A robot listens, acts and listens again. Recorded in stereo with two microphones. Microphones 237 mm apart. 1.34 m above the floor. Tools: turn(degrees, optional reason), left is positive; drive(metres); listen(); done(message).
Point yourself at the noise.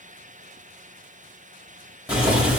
turn(degrees=-30)
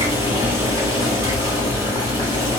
turn(degrees=25, reason="So it is at 25° left.")
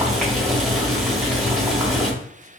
done("Found it: boiling, straight ahead.")